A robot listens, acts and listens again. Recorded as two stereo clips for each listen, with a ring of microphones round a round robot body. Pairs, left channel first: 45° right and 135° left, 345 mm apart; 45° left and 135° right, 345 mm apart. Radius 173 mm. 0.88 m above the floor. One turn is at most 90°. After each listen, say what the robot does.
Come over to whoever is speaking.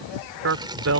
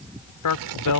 Turn 85° left.
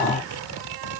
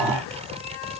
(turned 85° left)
Keep listening.
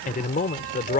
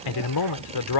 Turn 25° left.
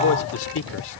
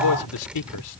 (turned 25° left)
Turn 10° left.
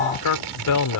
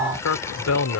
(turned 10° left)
Drive 1.0 m forward.
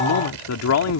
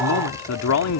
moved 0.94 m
Drive 1.0 m forward.
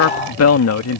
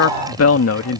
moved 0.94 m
Drive 1.0 m forward.
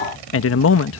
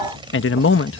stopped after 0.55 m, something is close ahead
I am next to the man speaking.